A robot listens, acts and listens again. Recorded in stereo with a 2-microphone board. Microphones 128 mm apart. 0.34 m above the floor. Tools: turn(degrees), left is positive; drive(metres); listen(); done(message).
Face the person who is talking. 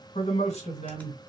turn(degrees=60)
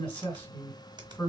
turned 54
turn(degrees=15)
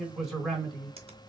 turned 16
done("Facing the man speaking.")